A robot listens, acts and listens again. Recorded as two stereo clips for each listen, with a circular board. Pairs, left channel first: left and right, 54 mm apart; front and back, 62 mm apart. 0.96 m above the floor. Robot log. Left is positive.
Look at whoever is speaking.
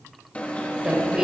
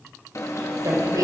note: The woman speaking: 160° right.
cmd yaw -160
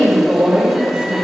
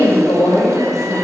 note: The woman speaking is now 20° right.
cmd yaw -20
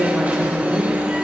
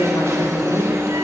end: Found it: a woman speaking, straight ahead.